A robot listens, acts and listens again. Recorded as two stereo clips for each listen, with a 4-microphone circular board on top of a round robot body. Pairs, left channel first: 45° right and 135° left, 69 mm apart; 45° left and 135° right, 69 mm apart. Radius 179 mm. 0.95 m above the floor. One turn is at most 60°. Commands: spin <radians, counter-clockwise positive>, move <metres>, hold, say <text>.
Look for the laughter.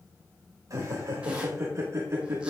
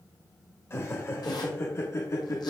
spin 1.05
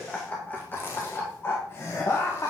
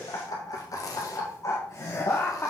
say Facing the laughter.